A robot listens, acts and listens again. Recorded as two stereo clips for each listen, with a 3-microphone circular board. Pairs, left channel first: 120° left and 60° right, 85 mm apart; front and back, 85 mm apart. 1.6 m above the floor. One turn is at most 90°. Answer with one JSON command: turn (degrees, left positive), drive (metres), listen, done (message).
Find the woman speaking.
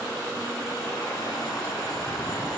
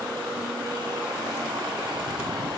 {"listen": true}
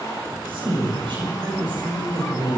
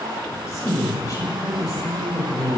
{"turn": -45}
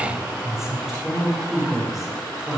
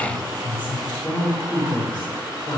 {"turn": 30}
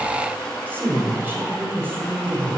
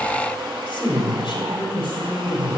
{"done": "Facing the woman speaking, over 4 m away."}